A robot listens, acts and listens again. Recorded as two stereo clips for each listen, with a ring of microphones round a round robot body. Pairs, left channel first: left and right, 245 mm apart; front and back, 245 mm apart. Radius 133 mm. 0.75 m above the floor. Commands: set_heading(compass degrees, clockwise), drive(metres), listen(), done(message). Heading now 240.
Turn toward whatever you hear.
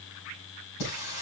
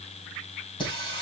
set_heading(170)
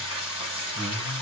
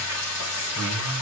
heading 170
set_heading(150)
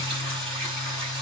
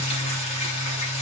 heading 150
done("Facing the singing.")